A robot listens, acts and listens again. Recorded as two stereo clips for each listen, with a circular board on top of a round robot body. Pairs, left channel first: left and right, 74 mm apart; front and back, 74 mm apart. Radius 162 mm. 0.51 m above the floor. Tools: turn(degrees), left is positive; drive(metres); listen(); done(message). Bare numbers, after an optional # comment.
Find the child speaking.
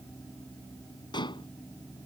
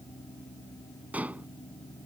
listen()
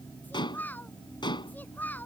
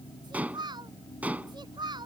# The child speaking: 155° left.
turn(155)
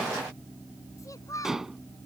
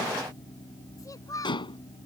# The child speaking is now 40° left.
turn(40)
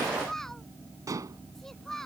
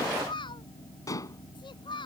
done("Found it: a child speaking, straight ahead.")